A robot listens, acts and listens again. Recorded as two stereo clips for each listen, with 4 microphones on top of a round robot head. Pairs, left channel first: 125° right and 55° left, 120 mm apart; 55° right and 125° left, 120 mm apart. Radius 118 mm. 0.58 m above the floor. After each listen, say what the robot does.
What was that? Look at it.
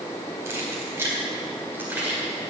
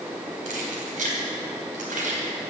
Turn 135° left.
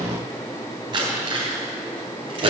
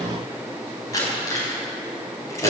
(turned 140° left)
Turn 10° left.
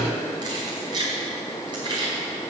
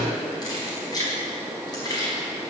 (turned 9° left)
Facing the keys jangling.